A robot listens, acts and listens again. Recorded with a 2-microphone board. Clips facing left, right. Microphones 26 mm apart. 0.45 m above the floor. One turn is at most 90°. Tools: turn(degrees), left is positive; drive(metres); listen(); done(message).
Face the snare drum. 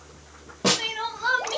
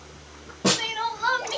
turn(degrees=15)
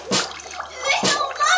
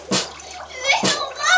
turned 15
done("Facing the snare drum.")